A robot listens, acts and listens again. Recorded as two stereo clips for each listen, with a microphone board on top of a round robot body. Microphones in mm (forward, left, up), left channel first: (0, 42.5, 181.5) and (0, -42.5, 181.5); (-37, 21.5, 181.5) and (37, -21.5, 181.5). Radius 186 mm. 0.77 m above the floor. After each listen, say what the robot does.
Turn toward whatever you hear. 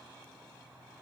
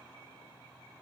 Keep listening.
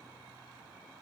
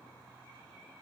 Keep listening.
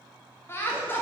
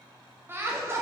Turn 25° left.
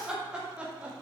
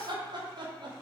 Turn 15° right.
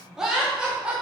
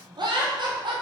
Turn 10° right.
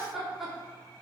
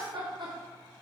Found it: laughter, straight ahead.